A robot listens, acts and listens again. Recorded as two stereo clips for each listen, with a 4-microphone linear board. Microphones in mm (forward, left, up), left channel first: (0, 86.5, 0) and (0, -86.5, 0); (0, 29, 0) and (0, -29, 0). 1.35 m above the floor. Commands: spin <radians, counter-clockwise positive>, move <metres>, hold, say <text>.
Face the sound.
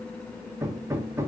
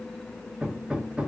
spin -0.26
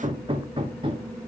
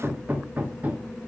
spin -2.62
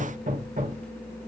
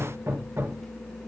spin -0.96
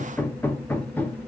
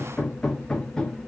spin 0.17
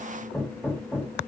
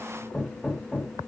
say Facing the hammering.